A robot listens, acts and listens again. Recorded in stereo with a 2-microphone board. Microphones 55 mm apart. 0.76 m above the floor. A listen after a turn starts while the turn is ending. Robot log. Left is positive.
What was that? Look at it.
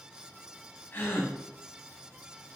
note: The gasp: about 40° left or 140° left.
cmd yaw +40
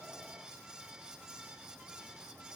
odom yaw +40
cmd idle
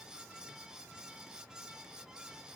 end: I heard a gasp, but can't make it out now. It was about straight ahead or 100° left.